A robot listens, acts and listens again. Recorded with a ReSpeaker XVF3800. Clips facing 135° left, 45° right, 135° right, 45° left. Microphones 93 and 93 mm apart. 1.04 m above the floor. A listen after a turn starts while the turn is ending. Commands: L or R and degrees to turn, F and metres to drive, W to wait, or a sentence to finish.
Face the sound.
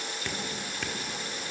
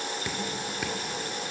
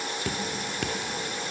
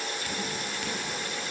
R125
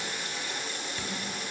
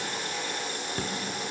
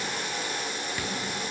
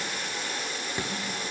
R15
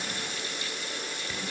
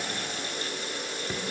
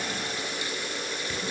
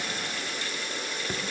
Facing the dripping, 2 to 4 m away.